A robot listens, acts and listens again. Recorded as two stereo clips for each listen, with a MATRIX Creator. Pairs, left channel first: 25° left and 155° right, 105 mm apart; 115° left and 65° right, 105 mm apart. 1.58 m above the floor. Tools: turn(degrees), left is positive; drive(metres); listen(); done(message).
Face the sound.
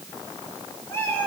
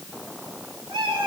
turn(degrees=-45)
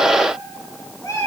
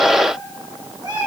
turn(degrees=-30)
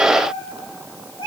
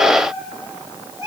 turn(degrees=-10)
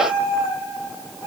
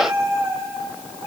turn(degrees=-10)
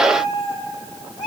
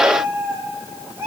done("Found it: a cat meowing, straight ahead, 2 to 4 m away.")